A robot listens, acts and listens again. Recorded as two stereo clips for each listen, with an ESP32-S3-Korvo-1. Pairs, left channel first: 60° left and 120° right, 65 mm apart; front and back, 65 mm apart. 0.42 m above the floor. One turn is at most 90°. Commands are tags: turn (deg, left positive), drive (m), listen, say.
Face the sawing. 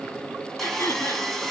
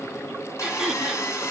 <turn deg="-25"/>
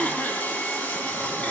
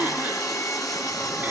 <say>Facing the sawing, 2 to 4 m away.</say>